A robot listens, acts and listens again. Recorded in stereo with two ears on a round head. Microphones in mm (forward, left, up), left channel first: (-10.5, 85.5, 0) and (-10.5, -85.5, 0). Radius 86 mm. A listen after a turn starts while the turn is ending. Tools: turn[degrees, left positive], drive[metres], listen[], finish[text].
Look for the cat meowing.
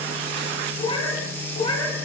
Thought: The cat meowing: about 25° left or 155° left.
Action: turn[25]
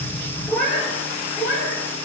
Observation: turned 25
Thought: So it is at 10° left.
Action: turn[10]
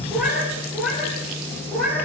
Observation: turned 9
Action: finish[Found it: a cat meowing, straight ahead, over 4 m away.]